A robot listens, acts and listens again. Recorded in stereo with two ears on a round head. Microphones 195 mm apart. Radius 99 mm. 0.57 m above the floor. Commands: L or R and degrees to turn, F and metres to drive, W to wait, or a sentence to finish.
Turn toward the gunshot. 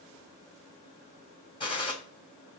L25
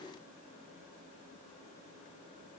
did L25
W
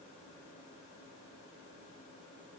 I heard a gunshot, but can't make it out now. It was about straight ahead or 130° left.